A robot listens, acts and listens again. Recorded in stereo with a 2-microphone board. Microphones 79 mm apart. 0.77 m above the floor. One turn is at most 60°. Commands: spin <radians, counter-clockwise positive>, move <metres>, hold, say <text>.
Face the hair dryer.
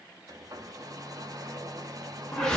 spin -0.79
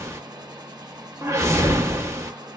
spin -1.05
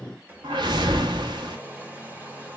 spin -0.44
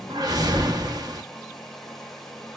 say Found it: a hair dryer, straight ahead, under 1 m away.